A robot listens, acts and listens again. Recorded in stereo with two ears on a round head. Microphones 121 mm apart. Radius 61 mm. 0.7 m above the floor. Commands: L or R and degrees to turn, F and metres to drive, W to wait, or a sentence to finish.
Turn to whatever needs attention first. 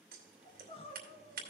L45
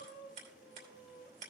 L80
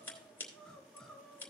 Facing the crying.